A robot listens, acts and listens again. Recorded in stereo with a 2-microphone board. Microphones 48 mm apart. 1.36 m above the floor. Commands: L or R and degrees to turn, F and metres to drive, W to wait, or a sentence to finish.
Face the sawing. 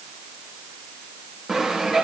R30
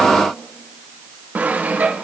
R140
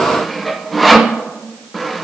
Found it: sawing, straight ahead.